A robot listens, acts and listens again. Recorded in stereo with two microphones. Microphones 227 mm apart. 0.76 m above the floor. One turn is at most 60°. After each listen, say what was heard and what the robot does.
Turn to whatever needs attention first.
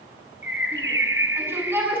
Turn 30° right.
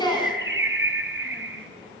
So it is at 20° left. Turn 20° left.
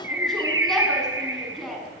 Facing the shout, over 4 m away.